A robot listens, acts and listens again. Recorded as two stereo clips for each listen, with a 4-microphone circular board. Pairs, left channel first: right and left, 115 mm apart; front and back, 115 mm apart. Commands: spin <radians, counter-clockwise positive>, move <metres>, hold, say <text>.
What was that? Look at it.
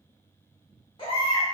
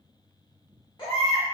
spin -0.79
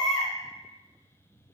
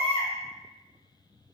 say Facing the baby crying.